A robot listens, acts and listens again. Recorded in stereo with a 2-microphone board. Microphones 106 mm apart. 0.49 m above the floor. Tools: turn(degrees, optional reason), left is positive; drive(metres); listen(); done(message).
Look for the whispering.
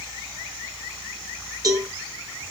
listen()
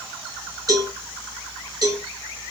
listen()
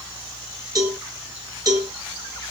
done("I can't make out whispering, only a cowbell.")